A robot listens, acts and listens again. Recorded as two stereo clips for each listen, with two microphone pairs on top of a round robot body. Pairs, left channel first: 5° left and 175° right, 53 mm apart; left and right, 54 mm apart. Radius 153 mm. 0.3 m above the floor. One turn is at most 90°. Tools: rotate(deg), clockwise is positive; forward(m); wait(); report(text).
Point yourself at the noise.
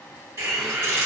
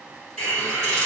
rotate(-90)
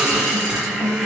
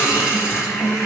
rotate(-90)
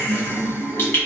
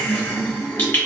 rotate(-40)
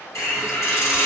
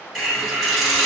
report("Found it: a hiss, straight ahead.")